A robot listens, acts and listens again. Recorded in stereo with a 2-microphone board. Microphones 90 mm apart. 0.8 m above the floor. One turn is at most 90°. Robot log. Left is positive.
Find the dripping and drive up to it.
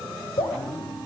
cmd yaw +90
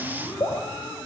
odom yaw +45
note: So it is at 35° left.
cmd yaw +35
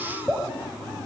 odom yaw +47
note: The dripping is now 10° right.
cmd yaw -10
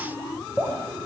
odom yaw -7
cmd fwd 1.0
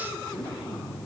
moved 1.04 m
cmd idle
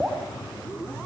note: The dripping is now 10° right.
cmd yaw -10
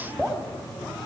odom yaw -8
cmd fwd 1.0
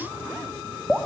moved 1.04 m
cmd fwd 1.0
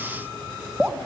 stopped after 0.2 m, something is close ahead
note: The dripping is now 10° right.
cmd yaw -10
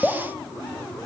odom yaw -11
end: I am next to the dripping.